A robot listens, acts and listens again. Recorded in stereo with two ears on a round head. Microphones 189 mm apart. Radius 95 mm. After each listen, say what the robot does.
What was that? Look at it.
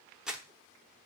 Turn 30° right.
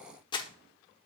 Turn 25° left.
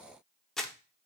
Facing the crumpling, under 1 m away.